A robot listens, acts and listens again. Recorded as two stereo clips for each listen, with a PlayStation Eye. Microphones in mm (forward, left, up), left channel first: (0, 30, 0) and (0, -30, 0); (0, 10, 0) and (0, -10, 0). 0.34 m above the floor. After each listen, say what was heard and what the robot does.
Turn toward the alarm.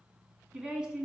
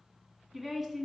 Keep listening.
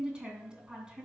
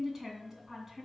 Keep listening.
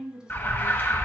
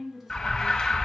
The alarm: about 35° left or 145° left. Turn 35° left.
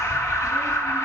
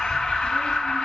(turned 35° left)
So it is at 105° left. Turn 105° left.
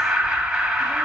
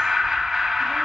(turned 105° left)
The alarm is now 10° right. Turn 10° right.
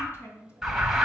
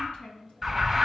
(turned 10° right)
Found it: an alarm, straight ahead.